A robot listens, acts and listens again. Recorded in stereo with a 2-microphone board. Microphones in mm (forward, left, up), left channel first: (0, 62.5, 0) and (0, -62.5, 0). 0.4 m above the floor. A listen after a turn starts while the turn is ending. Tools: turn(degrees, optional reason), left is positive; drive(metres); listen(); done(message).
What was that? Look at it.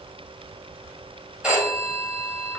turn(degrees=-30)
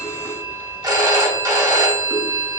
turn(degrees=-140, reason="So it is at 140° right.")
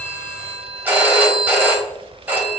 turn(degrees=-15, reason="The phone ringing is now 15° right.")
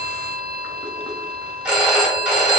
turn(degrees=-10, reason="The phone ringing is now 10° right.")
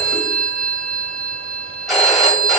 done("Found it: a phone ringing, straight ahead, 1 to 2 m away.")